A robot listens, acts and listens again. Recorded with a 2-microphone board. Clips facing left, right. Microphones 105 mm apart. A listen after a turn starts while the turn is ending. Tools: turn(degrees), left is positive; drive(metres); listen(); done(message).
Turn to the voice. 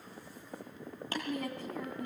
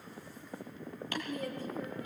turn(degrees=65)
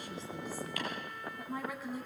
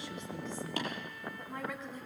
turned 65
turn(degrees=10)
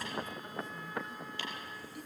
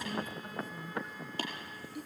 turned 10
done("Facing the woman speaking.")